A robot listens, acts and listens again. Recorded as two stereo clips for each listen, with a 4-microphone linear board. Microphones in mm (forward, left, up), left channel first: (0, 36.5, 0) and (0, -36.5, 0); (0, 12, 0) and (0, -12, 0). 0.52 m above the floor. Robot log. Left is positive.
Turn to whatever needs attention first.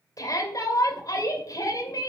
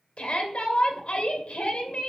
note: The shout: about 60° left or 120° left.
cmd yaw +60
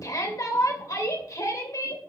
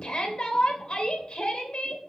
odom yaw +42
note: So it is at 65° left.
cmd yaw +65
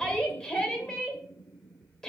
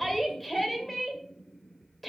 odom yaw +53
note: The shout is now 10° left.
cmd yaw +10
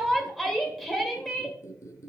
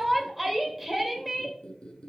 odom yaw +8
end: Found it: a shout, straight ahead.